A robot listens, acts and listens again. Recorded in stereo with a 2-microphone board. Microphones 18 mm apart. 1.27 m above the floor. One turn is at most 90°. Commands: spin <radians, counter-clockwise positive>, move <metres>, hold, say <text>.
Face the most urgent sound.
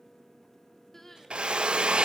spin 0.35
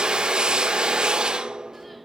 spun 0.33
hold
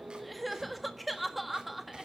say Found it: crying, straight ahead.